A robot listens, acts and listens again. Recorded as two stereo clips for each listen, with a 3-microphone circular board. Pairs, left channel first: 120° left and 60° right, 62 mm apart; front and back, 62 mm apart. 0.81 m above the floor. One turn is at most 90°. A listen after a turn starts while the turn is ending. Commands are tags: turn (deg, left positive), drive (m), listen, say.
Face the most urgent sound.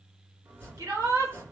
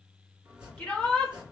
<turn deg="-75"/>
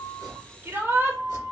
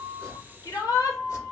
<turn deg="-10"/>
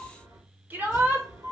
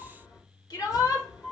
<say>Found it: a shout, straight ahead, 1 to 2 m away.</say>